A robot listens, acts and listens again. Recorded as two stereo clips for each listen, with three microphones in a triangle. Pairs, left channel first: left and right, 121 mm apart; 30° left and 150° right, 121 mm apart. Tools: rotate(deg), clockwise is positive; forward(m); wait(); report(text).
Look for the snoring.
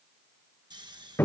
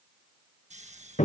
rotate(140)
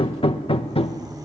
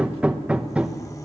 wait()
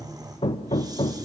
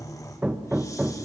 rotate(35)
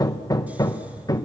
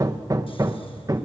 wait()
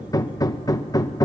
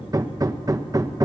wait()
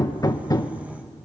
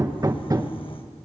report("Facing where the snoring came from. I can't hear it now.")